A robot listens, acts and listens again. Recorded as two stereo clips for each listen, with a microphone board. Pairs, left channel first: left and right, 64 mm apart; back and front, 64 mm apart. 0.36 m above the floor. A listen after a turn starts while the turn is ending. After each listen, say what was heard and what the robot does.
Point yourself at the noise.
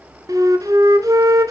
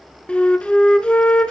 The flute: 110° right. Turn 110° right.
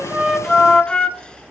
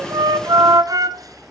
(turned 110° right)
The flute is now 15° left. Turn 15° left.
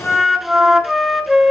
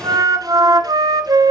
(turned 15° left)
Facing the flute.